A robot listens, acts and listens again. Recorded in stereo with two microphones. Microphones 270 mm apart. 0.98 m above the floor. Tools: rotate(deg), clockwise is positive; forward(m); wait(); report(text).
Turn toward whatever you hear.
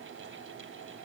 wait()
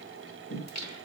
rotate(-90)
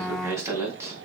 rotate(10)
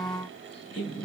report("Found it: singing, straight ahead.")